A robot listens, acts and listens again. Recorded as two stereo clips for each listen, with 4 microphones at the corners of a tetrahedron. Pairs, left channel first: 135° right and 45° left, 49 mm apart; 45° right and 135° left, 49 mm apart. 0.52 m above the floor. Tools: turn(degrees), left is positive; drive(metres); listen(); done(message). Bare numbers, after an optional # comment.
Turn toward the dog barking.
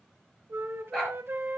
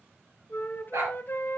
# The dog barking: 140° left.
turn(140)
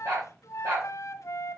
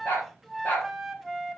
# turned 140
done("Found it: a dog barking, straight ahead, over 4 m away.")